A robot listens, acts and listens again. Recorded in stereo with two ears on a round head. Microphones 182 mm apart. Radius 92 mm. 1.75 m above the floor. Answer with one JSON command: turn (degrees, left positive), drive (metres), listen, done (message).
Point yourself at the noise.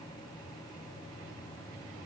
{"listen": true}
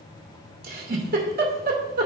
{"turn": -50}
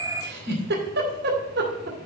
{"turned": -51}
{"turn": -70}
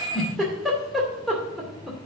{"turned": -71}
{"done": "Found it: a giggle, straight ahead."}